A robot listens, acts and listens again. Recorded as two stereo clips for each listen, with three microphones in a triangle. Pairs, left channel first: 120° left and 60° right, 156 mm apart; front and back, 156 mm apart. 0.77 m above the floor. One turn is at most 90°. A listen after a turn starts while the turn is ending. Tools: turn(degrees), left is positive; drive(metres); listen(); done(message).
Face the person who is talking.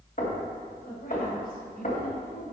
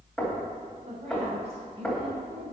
turn(degrees=90)
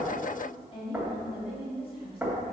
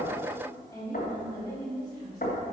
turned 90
turn(degrees=65)
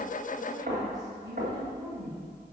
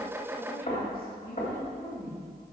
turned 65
done("Found it: a woman speaking, straight ahead.")